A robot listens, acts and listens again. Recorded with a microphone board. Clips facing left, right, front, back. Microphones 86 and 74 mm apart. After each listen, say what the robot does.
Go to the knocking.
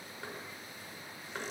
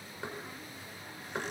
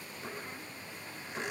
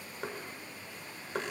Turn 160° right.
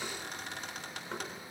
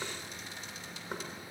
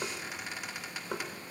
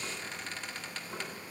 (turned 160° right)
Turn 15° right.
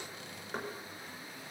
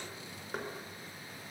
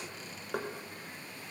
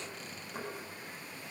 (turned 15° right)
Drive 1.0 m forward.
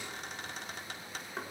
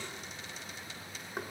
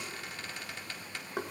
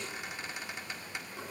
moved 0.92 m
Turn 10° right.
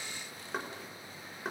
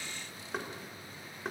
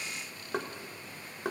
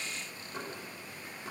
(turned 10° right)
Drive 1.0 m forward.
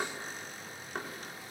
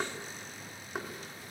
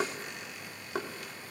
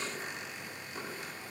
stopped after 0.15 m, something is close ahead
Something is in my way. I am facing the knocking but have not reached it.